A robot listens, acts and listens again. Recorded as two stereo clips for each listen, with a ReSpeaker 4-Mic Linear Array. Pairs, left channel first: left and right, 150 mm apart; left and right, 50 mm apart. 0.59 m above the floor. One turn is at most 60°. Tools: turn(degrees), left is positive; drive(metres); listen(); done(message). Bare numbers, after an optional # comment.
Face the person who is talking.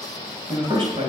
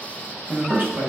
# The man speaking: about 35° right or 145° right.
turn(-35)
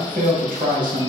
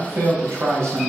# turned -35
# So it is at 105° right.
turn(-60)
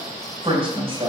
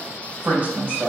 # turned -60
# The man speaking is now 40° right.
turn(-40)
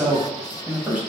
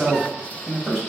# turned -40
# The man speaking is now 10° right.
turn(-10)
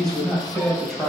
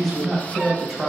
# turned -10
done("Found it: a man speaking, straight ahead.")